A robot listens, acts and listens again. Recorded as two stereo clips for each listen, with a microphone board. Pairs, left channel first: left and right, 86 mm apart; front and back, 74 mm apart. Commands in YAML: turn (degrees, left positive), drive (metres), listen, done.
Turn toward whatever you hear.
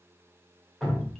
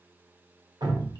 turn: 180
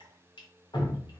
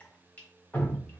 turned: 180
turn: 70
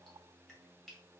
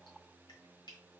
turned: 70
listen: true
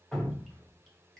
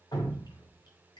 done: "Facing the dripping, 1 to 2 m away."